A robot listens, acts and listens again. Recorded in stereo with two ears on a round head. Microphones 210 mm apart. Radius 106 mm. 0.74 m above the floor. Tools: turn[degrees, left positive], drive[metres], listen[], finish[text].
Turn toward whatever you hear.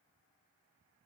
Action: listen[]
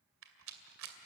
Thought: The rattle: about 60° right or 120° right.
Action: turn[-60]
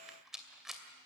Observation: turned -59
Action: finish[Found it: a rattle, straight ahead, 2 to 4 m away.]